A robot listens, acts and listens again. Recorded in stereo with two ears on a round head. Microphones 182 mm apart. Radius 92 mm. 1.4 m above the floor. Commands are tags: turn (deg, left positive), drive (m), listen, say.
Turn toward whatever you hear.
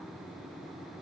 <listen/>
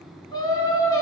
<turn deg="15"/>
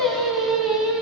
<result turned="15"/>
<turn deg="-30"/>
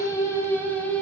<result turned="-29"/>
<turn deg="10"/>
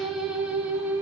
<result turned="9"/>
<turn deg="-10"/>
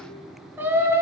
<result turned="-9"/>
<turn deg="-15"/>
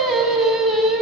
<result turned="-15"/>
<say>Found it: singing, straight ahead, 2 to 4 m away.</say>